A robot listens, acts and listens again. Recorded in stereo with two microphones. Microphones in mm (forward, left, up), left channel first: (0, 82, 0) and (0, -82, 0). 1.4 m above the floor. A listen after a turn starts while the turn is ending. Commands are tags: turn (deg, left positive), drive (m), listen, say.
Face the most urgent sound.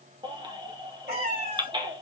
<turn deg="-30"/>
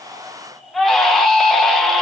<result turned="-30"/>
<say>Found it: a baby crying, straight ahead.</say>